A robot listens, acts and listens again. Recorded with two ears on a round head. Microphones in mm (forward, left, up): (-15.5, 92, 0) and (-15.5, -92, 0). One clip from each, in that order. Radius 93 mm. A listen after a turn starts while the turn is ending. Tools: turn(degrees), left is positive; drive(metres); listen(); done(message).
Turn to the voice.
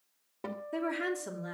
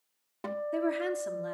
turn(degrees=-30)
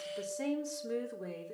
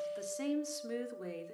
turn(degrees=-115)
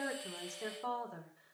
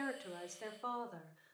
turn(degrees=-20)
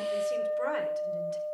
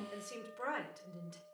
listen()
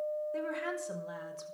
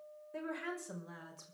done("Found it: a woman speaking, straight ahead, over 4 m away.")